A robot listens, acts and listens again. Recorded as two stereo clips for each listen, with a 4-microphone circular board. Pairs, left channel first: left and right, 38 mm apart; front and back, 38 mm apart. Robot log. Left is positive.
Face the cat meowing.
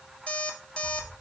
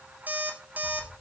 note: The cat meowing: 15° left.
cmd yaw +15
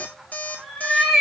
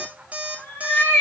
end: Found it: a cat meowing, straight ahead.